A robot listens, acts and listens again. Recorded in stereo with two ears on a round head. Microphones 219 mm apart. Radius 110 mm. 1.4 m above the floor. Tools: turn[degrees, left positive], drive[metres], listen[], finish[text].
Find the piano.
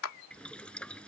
Action: listen[]
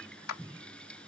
Action: listen[]
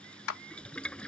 Action: finish[I can't make out a piano to turn to.]